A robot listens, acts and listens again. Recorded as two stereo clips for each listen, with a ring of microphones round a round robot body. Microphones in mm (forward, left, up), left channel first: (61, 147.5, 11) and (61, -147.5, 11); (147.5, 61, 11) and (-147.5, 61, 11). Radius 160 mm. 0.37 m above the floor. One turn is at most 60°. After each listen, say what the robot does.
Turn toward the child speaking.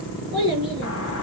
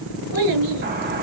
Turn 60° right.
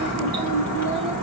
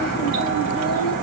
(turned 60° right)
Turn 60° right.
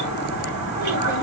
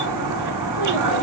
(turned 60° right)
Turn 20° right.
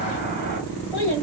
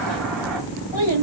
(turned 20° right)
Turn 20° right.
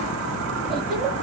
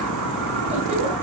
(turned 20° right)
Keep listening.
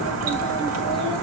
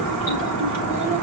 Keep listening.
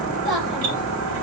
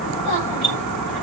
Facing the child speaking, over 4 m away.